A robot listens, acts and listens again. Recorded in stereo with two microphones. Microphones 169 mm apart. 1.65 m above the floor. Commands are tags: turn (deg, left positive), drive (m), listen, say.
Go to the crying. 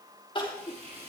<turn deg="30"/>
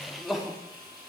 <drive m="1.0"/>
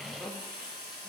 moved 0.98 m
<drive m="1.0"/>
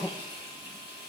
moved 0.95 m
<drive m="1.0"/>
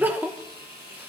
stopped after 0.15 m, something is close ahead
<turn deg="-10"/>
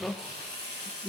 <say>Arrived at the crying, straight ahead.</say>